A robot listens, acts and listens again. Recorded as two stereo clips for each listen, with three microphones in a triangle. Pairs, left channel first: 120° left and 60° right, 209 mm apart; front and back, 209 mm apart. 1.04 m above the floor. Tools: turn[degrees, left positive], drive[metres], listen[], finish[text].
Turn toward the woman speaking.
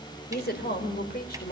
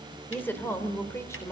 Thought: The woman speaking: 75° left.
Action: turn[75]
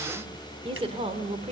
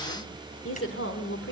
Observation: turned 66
Action: finish[Facing the woman speaking.]